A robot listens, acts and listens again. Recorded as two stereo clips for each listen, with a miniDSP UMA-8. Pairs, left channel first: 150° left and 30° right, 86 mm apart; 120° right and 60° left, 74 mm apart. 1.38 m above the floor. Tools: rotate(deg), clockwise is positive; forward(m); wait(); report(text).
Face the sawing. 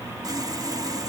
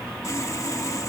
rotate(75)
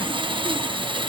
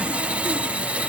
rotate(10)
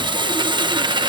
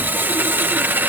report("Found it: sawing, straight ahead.")